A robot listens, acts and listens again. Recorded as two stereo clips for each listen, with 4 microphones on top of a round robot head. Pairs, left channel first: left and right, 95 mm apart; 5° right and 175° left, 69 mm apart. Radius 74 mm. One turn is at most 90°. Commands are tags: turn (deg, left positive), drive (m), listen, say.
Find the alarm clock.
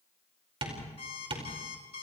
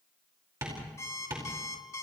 <turn deg="45"/>
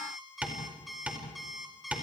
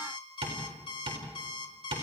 <say>Facing the alarm clock.</say>